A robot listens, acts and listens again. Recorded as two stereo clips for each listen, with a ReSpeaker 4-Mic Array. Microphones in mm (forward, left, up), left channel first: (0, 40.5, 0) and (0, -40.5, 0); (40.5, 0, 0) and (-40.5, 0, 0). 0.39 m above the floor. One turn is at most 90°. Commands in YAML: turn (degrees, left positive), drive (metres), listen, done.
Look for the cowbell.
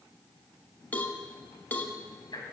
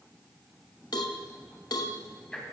turn: 25
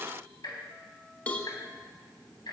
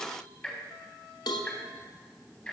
turn: 20
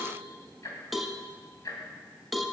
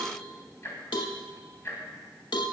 done: "Found it: a cowbell, straight ahead."